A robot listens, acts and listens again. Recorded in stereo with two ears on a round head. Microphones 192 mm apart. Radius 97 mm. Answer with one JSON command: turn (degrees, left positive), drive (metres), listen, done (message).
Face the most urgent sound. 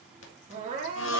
{"turn": -30}
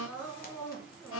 {"done": "Found it: crying, straight ahead, over 4 m away."}